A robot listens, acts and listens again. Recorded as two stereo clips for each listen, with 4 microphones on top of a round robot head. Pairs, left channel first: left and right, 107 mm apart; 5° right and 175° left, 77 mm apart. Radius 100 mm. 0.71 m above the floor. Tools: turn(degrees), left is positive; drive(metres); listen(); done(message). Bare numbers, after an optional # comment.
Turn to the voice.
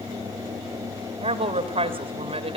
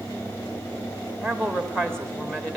# The woman speaking: 85° right.
turn(-85)
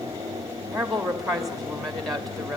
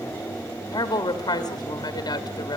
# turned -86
done("Facing the woman speaking.")